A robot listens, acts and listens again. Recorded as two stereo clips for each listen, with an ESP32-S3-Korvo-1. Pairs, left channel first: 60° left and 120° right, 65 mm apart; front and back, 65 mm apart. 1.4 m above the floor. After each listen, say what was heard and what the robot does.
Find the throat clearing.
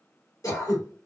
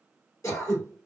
The throat clearing: 35° left. Turn 35° left.
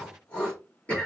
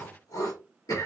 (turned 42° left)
Facing the throat clearing, 2 to 4 m away.